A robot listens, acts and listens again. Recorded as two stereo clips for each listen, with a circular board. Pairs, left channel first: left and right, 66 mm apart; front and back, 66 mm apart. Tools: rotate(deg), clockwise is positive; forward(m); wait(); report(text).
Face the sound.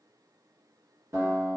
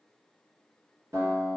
rotate(135)
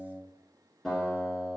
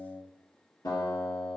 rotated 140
report("Found it: a guitar, straight ahead, 1 to 2 m away.")